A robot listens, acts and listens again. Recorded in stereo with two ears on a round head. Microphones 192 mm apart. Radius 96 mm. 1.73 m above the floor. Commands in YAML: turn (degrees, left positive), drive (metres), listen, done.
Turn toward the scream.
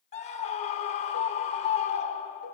turn: 30
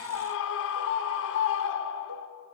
turn: 115
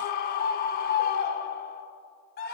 turn: 45
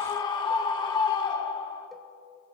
turn: 20
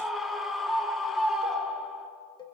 done: "Facing the scream."